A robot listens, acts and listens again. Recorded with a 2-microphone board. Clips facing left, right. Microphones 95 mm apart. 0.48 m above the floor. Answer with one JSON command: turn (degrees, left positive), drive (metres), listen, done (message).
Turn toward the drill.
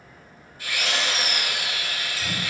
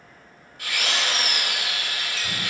{"turn": -70}
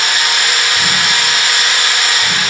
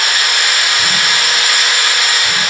{"done": "Found it: a drill, straight ahead."}